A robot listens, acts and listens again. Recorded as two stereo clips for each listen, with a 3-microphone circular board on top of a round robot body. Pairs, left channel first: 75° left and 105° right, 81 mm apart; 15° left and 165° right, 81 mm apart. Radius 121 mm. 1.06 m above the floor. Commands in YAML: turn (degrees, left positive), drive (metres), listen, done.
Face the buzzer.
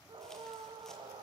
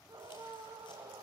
listen: true
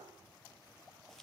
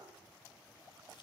listen: true
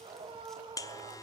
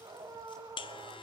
turn: 30
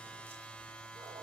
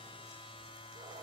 done: "Found it: a buzzer, straight ahead, 1 to 2 m away."